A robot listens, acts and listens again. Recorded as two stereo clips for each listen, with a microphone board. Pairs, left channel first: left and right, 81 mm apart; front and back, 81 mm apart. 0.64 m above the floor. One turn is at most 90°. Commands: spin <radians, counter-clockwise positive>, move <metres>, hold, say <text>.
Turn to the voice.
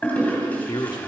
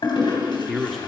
spin 1.57
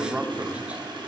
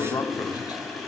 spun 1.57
spin -0.35
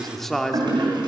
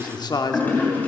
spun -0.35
say Facing the man speaking.